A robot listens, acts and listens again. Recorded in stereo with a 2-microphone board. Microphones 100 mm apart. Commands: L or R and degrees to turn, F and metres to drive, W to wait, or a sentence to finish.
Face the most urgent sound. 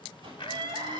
R55
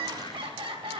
R65
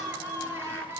R25
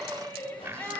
L20
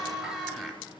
Facing the crying, 1 to 2 m away.